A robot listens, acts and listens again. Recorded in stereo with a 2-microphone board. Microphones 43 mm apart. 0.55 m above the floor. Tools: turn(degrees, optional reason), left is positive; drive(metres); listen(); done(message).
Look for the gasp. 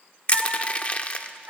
listen()
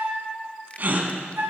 turn(degrees=-50, reason="The gasp: about 50° right or 130° right.")
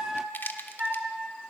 listen()
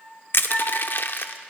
done("I heard a gasp, but can't make it out now. It was about straight ahead or 80° right.")